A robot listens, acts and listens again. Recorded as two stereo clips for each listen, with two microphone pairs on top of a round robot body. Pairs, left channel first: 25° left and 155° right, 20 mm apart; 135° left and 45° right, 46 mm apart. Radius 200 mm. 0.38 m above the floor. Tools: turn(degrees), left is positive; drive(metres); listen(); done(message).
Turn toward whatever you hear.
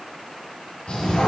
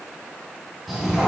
turn(degrees=45)
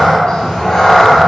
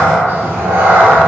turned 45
turn(degrees=-30)
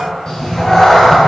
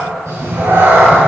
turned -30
turn(degrees=-35)
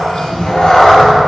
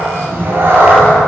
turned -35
turn(degrees=-25)
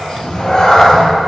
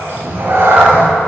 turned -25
turn(degrees=-25)
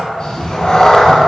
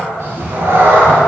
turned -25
turn(degrees=-20)
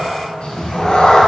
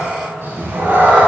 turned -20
turn(degrees=-10)
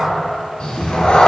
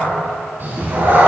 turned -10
done("Facing the cat meowing.")